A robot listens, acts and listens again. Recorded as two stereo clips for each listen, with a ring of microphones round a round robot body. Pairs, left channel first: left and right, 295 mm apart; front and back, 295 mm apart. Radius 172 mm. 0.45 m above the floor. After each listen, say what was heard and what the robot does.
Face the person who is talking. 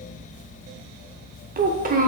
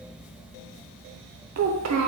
The child speaking: 150° right. Turn 150° right.
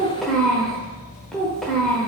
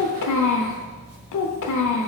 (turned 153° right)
Facing the child speaking, under 1 m away.